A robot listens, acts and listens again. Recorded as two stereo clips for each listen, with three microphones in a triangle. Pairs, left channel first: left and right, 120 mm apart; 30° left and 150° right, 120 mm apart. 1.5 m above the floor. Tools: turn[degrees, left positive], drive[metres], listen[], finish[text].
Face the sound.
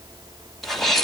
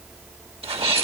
Thought: The sneeze: straight behind.
Action: turn[180]
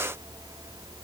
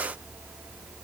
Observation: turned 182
Action: finish[I heard a sneeze from this way, but can't make it out now.]